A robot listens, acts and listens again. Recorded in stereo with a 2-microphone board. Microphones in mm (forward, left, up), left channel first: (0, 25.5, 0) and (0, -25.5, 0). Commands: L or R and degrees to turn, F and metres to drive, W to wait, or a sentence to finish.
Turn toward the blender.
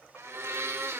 R55
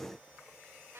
W
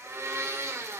R70
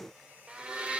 R25
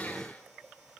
W
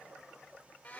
L30
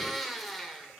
Found it: a blender, straight ahead.